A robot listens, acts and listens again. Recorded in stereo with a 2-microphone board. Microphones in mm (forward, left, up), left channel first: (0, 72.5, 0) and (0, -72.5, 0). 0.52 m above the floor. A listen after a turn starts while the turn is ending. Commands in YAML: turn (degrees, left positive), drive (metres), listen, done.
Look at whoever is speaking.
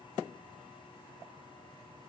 listen: true
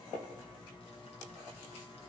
listen: true
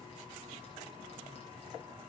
done: "I can't make out anyone speaking to turn to."